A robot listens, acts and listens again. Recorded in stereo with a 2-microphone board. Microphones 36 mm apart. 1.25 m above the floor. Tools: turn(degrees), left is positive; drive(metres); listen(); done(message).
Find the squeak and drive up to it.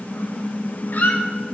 turn(degrees=70)
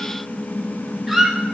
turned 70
drive(metres=1.0)
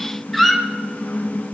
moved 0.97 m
drive(metres=1.0)
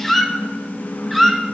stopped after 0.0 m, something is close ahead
done("Arrived at the squeak, straight ahead.")